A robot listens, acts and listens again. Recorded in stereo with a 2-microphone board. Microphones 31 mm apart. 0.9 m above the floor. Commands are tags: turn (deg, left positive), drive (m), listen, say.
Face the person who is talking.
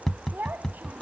<turn deg="-90"/>
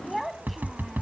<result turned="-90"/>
<say>Found it: a child speaking, straight ahead.</say>